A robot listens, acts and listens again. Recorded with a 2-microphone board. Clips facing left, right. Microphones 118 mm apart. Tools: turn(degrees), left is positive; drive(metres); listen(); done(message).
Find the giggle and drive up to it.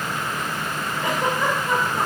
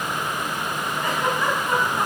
turn(degrees=20)
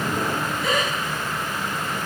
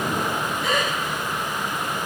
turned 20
drive(metres=1.0)
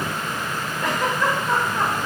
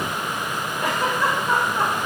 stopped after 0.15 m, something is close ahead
turn(degrees=-10)
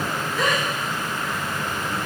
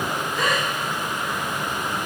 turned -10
done("Something is in my way. I am facing the giggle but have not reached it.")